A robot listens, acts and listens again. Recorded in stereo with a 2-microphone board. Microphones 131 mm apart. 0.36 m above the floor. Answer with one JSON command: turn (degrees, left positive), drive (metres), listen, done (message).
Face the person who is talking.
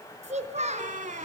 {"turn": -65}
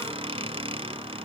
{"listen": true}
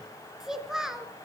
{"done": "Facing the child speaking, 2 to 4 m away."}